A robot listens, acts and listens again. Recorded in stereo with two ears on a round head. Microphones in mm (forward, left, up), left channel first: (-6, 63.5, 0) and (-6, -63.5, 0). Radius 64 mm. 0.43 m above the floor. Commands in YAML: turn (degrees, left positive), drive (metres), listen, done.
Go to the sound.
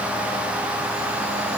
listen: true
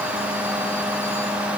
listen: true
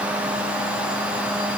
done: "I can't make out anything."